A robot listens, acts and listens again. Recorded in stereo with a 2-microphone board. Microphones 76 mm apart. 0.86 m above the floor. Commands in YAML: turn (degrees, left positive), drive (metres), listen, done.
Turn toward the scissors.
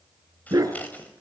turn: 20
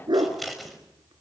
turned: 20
done: "Found it: scissors, straight ahead."